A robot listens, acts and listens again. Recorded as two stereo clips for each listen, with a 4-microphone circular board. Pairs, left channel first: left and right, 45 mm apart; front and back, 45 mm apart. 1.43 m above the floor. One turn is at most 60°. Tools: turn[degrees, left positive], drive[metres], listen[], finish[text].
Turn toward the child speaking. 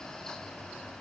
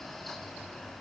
Action: listen[]
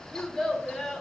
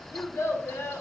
Action: finish[Found it: a child speaking, straight ahead, under 1 m away.]